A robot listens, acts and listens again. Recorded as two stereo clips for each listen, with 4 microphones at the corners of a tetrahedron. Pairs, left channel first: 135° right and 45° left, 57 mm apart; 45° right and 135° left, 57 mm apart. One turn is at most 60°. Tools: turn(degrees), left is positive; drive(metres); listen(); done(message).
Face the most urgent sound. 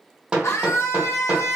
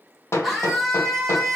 turn(degrees=-60)
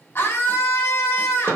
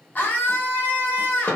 turn(degrees=-60)
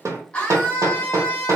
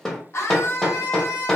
turn(degrees=-60)
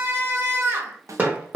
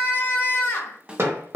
done("Facing the scream.")